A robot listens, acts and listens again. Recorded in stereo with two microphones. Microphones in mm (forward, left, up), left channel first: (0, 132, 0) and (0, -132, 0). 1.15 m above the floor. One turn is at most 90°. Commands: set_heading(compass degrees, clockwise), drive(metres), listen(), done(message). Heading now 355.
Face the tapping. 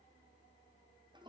listen()
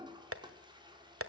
set_heading(50)
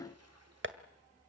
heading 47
set_heading(102)
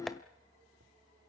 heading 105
done("Found it: tapping, straight ahead.")